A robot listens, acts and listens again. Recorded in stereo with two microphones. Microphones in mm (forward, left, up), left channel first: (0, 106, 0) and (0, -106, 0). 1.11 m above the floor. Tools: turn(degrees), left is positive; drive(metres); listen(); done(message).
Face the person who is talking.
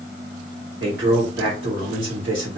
turn(degrees=-70)
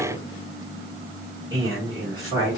turn(degrees=-20)
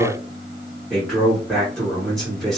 done("Found it: a man speaking, straight ahead.")